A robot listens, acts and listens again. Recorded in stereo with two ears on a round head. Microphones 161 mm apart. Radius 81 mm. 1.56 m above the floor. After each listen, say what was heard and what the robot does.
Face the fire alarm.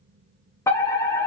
The fire alarm: about 15° left or 165° left. Turn 15° left.
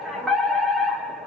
Found it: a fire alarm, straight ahead, 2 to 4 m away.